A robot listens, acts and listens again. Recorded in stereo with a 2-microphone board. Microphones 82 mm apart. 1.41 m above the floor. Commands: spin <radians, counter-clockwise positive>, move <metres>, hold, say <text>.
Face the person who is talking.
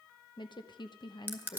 spin 1.22
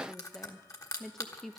say Found it: a woman speaking, straight ahead.